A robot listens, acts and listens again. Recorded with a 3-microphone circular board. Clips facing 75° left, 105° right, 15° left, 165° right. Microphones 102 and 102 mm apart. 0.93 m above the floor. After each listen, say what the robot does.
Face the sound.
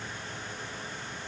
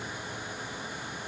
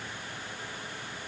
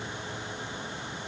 Keep listening.
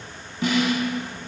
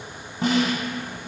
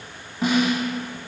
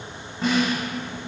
Turn 70° right.
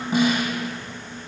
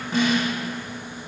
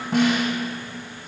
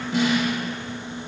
Facing the snare drum, under 1 m away.